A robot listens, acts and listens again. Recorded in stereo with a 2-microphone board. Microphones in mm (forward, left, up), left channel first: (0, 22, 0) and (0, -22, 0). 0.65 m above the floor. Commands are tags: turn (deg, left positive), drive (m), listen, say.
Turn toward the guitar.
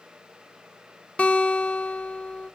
<turn deg="30"/>
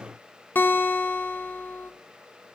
<turn deg="115"/>
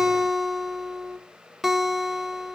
<say>Found it: a guitar, straight ahead.</say>